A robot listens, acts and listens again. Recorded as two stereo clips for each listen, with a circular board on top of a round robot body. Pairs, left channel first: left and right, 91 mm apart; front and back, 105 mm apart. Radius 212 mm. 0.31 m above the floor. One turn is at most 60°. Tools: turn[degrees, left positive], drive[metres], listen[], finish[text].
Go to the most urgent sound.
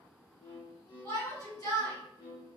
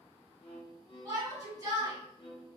Thought: The shout: 130° left.
Action: turn[60]
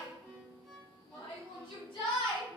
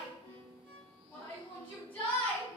Thought: The shout is now 75° left.
Action: turn[60]
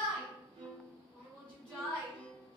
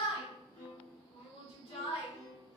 Thought: The shout is now 10° left.
Action: turn[10]
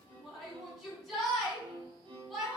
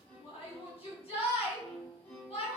Action: drive[1.0]
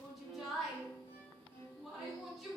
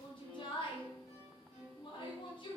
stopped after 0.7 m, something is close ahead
Action: finish[Arrived at the shout, straight ahead.]